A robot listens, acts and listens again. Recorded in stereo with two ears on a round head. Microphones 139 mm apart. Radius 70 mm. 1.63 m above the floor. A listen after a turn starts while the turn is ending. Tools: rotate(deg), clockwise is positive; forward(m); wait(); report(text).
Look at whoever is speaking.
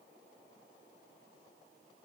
wait()
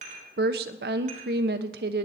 rotate(70)
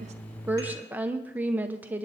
rotate(10)
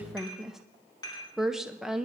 report("Facing the woman speaking, under 1 m away.")